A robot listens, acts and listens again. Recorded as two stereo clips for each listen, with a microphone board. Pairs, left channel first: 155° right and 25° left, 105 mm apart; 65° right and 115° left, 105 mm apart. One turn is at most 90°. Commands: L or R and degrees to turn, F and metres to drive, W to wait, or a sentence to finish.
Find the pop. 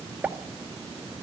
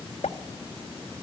R55
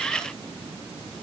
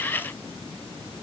I heard a pop from this way, but can't make it out now.